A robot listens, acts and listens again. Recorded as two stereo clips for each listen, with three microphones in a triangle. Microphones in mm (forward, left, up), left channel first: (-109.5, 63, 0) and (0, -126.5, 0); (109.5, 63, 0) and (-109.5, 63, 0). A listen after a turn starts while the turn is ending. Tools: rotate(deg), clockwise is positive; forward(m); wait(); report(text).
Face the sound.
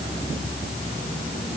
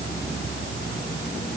wait()
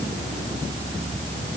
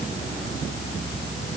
wait()
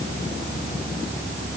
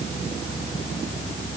report("I can't make out anything to turn to.")